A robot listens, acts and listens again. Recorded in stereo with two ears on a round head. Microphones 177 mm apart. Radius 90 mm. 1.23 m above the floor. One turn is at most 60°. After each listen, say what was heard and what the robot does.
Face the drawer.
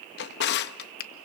The drawer: about 60° left or 120° left. Turn 60° left.
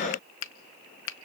Keep listening.
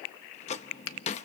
So it is at 40° left. Turn 40° left.
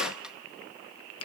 Facing the drawer.